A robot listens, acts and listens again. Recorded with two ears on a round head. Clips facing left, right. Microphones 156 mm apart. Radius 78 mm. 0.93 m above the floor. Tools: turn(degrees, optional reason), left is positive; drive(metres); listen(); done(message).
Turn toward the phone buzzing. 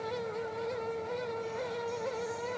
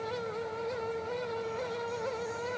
listen()
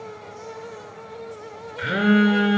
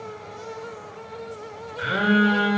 turn(degrees=25, reason="The phone buzzing: about 25° left or 155° left.")
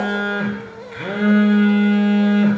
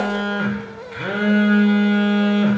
done("Facing the phone buzzing, 1 to 2 m away.")